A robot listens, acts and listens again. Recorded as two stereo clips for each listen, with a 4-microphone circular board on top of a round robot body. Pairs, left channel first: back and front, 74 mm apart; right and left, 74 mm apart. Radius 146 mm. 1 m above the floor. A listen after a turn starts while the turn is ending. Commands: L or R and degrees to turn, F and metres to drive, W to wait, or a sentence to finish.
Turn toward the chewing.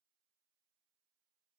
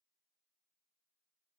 W
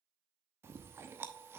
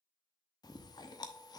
R60
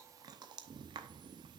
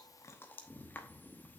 R25
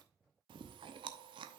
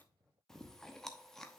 Facing the chewing, under 1 m away.